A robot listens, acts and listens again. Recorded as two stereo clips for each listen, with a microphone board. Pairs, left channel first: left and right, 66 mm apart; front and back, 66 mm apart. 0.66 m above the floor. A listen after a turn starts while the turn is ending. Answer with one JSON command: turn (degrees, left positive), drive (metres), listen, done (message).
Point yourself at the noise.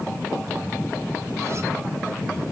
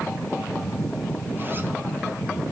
{"listen": true}
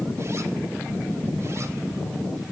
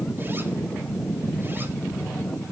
{"listen": true}
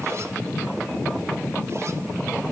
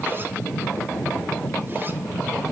{"done": "I can't make out anything to turn to."}